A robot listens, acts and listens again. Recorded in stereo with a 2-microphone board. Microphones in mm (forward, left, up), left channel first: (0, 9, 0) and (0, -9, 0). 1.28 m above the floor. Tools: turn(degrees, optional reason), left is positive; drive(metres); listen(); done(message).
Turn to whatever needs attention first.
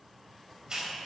listen()
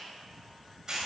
listen()
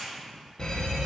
turn(degrees=40, reason="The fire alarm: about 40° left or 140° left.")
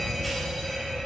turn(degrees=15, reason="So it is at 15° left.")
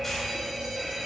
done("Found it: a fire alarm, straight ahead.")